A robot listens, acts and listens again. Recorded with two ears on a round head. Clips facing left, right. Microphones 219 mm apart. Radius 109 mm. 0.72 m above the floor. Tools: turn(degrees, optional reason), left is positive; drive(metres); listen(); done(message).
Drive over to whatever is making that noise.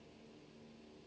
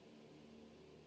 listen()
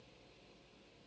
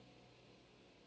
listen()
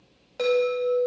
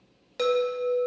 turn(degrees=-35, reason="The chime: about 35° right or 145° right.")
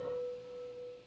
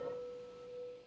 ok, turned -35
turn(degrees=-110, reason="So it is at 110° right.")
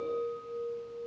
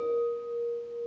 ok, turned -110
turn(degrees=-55, reason="The chime is now 55° right.")
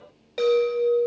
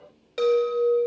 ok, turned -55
turn(degrees=-20, reason="The chime is now 20° right.")
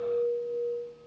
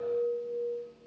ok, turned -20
drive(metres=1.0)
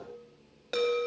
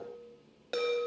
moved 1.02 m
drive(metres=1.0)
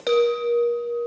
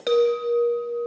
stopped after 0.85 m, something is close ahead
done("I am next to the chime.")